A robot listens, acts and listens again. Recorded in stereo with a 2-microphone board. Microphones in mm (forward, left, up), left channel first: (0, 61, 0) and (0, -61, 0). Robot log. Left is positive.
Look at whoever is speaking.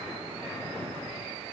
cmd idle
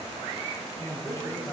note: The man speaking: about 35° left or 145° left.
cmd yaw +35
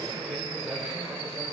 end: Facing the man speaking.